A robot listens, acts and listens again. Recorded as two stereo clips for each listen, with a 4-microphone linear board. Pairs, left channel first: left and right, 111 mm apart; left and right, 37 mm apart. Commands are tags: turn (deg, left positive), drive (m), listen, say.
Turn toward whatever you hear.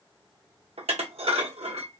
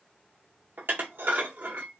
<turn deg="-60"/>
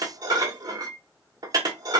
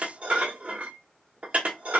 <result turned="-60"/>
<turn deg="-40"/>
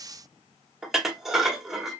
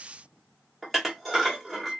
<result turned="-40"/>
<say>Found it: dishes clattering, straight ahead, under 1 m away.</say>